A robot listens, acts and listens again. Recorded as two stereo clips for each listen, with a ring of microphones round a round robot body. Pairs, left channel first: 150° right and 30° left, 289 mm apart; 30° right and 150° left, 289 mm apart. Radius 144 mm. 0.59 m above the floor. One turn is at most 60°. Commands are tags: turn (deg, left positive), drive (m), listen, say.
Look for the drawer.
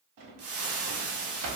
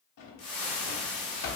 <turn deg="10"/>
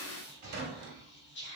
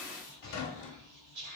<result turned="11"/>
<say>Facing the drawer, under 1 m away.</say>